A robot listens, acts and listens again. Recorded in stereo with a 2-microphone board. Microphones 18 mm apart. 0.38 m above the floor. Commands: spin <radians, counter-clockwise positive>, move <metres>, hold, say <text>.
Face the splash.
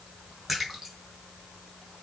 spin -0.52
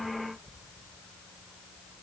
hold
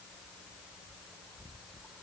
say I heard a splash, but can't make it out now. It was about 20° left or 140° right.